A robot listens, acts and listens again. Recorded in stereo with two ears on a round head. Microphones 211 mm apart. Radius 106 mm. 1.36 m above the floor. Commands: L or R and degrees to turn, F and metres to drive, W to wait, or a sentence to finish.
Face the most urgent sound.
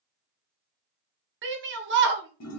R50
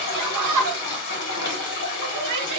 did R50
R80
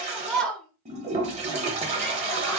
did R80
Facing the shout.